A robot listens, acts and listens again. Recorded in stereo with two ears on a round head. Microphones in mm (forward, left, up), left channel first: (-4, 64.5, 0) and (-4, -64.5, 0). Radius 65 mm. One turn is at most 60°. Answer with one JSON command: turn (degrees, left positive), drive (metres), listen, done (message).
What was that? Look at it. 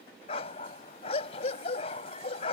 {"turn": 45}
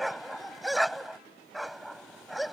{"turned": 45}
{"done": "Found it: a dog barking, straight ahead."}